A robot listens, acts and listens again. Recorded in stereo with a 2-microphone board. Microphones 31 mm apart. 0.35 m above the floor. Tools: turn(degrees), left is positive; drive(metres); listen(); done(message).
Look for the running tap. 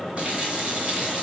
turn(degrees=-40)
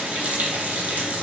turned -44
turn(degrees=-90)
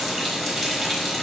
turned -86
done("Facing the running tap, under 1 m away.")